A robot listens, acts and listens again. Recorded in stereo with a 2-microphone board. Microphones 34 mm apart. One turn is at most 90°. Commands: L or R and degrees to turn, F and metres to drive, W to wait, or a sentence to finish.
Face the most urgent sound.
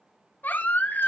L65
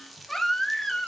L10
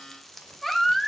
Facing the baby crying.